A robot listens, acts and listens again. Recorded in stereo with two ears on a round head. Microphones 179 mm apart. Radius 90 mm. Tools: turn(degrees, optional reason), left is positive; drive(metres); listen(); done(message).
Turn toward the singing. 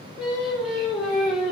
turn(degrees=-30)
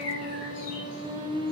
turn(degrees=-145, reason="So it is at 145° right.")
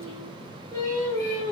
turn(degrees=20, reason="The singing is now 20° left.")
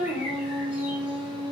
done("Found it: singing, straight ahead.")